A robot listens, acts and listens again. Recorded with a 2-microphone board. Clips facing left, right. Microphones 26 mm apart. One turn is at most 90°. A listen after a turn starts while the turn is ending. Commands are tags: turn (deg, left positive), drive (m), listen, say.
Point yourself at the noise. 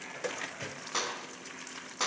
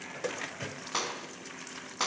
<turn deg="-20"/>
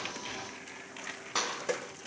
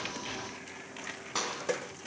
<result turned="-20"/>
<say>Found it: a clap, straight ahead.</say>